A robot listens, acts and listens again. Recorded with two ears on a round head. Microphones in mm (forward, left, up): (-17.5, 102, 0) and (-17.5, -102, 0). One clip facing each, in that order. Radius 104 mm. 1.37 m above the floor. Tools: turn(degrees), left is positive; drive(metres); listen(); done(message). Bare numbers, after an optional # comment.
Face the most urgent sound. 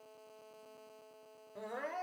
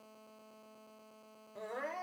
turn(30)
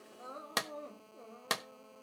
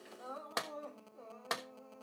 # So it is at 150° left.
turn(150)
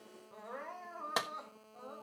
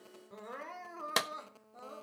# The crying is now 35° right.
turn(-35)
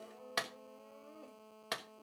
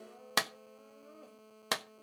done("Facing the crying, 2 to 4 m away.")